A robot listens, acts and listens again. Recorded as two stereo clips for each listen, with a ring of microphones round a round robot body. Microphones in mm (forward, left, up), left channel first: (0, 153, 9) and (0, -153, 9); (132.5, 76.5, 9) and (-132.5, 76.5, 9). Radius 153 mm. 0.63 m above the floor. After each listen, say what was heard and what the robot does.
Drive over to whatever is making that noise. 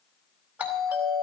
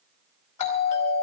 Drive 1.0 m forward.
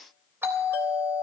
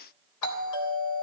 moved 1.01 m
Drive 1.0 m forward.
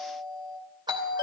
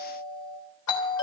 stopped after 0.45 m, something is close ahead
The doorbell is now 15° right. Turn 15° right.
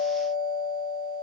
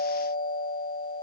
Blocked. The doorbell is further on, straight ahead.